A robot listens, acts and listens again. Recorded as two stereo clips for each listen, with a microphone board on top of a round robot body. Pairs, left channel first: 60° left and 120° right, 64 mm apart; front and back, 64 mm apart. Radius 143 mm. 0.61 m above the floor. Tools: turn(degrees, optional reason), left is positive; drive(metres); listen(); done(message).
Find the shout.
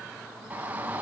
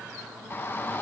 turn(degrees=-55, reason="The shout: 55° right.")
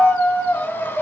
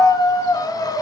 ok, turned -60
done("Facing the shout.")